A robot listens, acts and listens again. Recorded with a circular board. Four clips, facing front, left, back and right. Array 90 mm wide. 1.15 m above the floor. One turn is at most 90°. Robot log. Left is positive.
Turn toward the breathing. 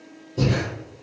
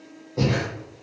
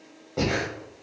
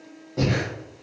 note: The breathing: straight behind.
cmd yaw +90
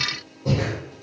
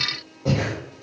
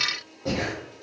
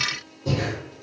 note: The breathing is now 105° left.
cmd yaw +90
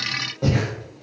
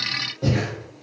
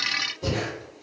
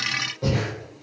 end: Facing the breathing.